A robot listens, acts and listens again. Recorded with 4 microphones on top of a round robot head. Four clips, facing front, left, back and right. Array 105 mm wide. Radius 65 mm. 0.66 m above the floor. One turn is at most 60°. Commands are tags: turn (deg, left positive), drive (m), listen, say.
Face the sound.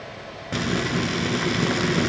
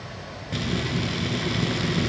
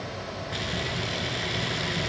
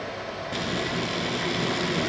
<say>Found it: frying, straight ahead, 2 to 4 m away.</say>